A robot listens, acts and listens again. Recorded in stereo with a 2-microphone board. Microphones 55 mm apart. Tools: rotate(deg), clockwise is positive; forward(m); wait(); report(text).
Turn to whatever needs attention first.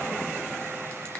wait()
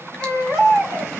rotate(30)
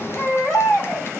rotate(-15)
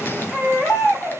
report("Facing the baby crying.")